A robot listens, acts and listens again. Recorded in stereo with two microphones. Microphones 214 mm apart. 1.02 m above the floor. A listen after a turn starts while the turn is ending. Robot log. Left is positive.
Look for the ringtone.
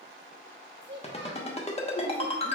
note: The ringtone: about 30° left or 150° left.
cmd yaw +30
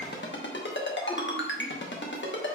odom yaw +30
note: So it is at 120° left.
cmd yaw +120
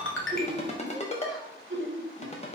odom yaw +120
note: The ringtone is now 30° left.
cmd yaw +30
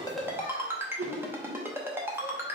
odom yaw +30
note: The ringtone is now 10° right.
cmd yaw -10
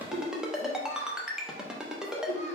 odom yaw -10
end: Found it: a ringtone, straight ahead.